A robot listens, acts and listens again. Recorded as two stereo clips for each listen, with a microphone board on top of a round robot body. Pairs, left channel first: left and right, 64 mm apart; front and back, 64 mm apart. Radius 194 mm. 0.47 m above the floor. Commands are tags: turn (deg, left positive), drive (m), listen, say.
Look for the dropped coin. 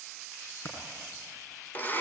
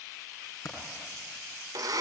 <turn deg="40"/>
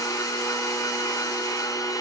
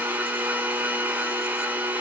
<say>Facing where the dropped coin came from. I can't hear it now.</say>